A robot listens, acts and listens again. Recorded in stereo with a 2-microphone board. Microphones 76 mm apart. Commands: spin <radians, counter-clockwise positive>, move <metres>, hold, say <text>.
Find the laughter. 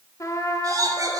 spin -0.96
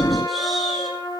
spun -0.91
hold
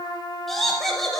say Found it: laughter, straight ahead, over 4 m away.